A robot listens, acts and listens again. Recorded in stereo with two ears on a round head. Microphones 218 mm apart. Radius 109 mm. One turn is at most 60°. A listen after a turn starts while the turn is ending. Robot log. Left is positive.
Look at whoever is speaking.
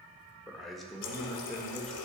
cmd yaw +30
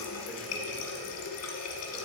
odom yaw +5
cmd idle
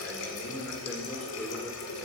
cmd yaw +30
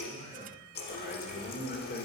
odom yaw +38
note: So it is at 140° left.
cmd yaw +60
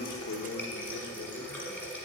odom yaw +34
note: Nothing new. It was at 105° left.
cmd yaw +60
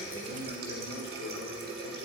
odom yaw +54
note: Nothing new. It was at 50° left.
cmd yaw +50
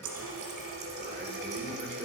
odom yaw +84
note: Nothing new. It was at 35° right.
cmd yaw -35
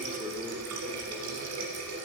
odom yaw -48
note: Nothing new. It was at 15° left.
cmd yaw +15
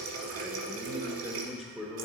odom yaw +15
end: Found it: a man speaking, straight ahead.